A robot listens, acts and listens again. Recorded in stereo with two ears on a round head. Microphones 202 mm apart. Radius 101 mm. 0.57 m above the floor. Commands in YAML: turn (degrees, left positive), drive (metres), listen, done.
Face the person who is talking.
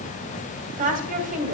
turn: -35
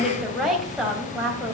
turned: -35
done: "Found it: a woman speaking, straight ahead."